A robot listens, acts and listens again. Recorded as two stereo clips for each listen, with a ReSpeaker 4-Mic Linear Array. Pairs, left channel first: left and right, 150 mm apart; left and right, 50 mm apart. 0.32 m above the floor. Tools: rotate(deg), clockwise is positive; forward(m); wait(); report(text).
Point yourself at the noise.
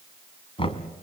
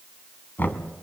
rotate(-40)
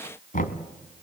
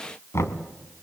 rotate(-100)
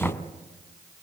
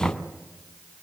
rotate(-10)
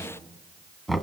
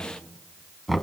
report("Facing the knocking, 1 to 2 m away.")